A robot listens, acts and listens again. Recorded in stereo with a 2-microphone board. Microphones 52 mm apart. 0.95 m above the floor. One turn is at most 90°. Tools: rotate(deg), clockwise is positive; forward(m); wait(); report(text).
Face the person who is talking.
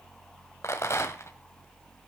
wait()
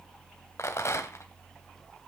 wait()
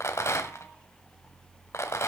report("I can't make out anyone speaking to turn to.")